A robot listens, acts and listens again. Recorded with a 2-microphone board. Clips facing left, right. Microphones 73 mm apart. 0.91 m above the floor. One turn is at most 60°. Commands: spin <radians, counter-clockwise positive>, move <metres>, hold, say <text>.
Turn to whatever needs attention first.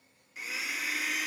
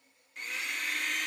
hold
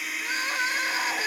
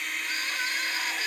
spin 0.52
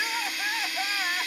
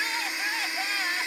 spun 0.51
spin 0.17
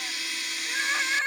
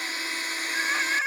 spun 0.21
say Found it: crying, straight ahead.